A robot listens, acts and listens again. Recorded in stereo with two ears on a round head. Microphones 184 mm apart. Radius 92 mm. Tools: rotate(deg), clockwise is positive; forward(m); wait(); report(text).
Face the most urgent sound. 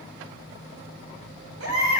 rotate(90)
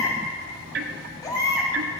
rotate(-15)
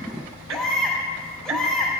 report("Found it: a baby crying, straight ahead.")